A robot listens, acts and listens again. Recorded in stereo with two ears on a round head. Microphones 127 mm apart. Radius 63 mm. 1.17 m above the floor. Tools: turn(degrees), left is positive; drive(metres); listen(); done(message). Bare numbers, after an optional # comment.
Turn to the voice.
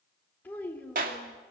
turn(30)
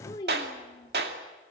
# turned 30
# So it is at 155° left.
turn(155)
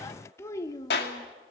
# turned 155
# The child speaking is now 25° left.
turn(25)
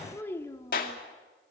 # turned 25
# The child speaking is now 20° left.
turn(20)
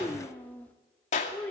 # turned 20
# The child speaking is now 10° left.
turn(10)
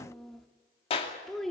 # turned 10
done("Facing the child speaking, 1 to 2 m away.")